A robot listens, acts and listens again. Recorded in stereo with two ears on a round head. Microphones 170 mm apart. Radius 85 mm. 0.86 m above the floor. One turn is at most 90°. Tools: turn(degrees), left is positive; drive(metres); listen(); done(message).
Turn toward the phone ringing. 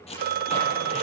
turn(degrees=-50)
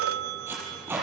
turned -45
turn(degrees=-85)
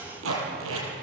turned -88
listen()
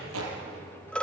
done("Facing the phone ringing.")